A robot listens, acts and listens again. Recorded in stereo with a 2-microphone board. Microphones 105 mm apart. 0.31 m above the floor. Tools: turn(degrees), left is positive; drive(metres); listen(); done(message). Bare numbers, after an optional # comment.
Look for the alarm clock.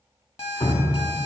# The alarm clock: about 65° left or 115° left.
turn(65)
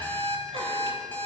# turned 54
# So it is at 20° left.
turn(20)
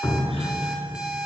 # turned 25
done("Found it: an alarm clock, straight ahead.")